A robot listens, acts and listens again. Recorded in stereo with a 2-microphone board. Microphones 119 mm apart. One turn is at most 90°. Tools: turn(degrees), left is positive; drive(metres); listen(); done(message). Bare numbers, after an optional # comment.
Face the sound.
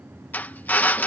turn(30)
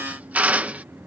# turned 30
# So it is at 15° right.
turn(-15)
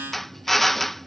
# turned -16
done("Facing the drill.")